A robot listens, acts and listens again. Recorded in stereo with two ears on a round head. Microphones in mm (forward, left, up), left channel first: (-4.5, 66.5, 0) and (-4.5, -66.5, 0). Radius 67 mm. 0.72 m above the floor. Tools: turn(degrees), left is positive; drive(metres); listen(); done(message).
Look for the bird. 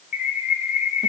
turn(degrees=55)
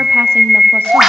done("Facing the bird, under 1 m away.")